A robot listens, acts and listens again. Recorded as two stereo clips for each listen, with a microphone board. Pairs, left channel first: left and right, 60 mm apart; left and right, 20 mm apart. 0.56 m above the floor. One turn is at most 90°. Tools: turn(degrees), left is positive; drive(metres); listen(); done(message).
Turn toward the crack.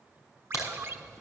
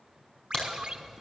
turn(degrees=55)
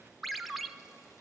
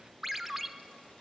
listen()
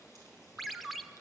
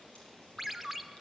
done("I heard a crack, but can't make it out now. It was about straight ahead or 70° left.")